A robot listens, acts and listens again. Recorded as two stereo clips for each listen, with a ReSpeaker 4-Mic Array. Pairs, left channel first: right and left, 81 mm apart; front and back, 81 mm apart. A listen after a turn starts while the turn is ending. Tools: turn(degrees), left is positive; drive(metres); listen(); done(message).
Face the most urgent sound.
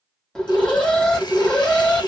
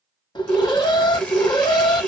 turn(degrees=-10)
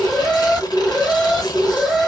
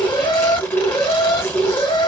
done("Facing the alarm, 1 to 2 m away.")